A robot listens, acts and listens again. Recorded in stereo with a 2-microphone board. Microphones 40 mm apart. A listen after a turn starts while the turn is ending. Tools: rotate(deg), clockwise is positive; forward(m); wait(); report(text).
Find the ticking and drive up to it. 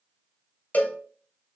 wait()
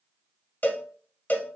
wait()
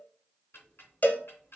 rotate(-75)
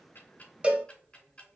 rotate(-30)
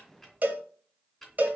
forward(1.0)
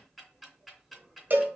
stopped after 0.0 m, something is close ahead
report("Something is in my way. I am facing the ticking but have not reached it.")